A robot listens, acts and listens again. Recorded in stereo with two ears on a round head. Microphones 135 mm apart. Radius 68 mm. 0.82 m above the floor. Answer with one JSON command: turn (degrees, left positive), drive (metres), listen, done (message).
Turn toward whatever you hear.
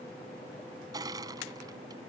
{"turn": -25}
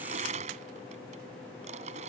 {"turn": -125}
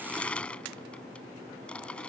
{"turn": 10}
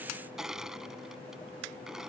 {"done": "Found it: crushing, straight ahead."}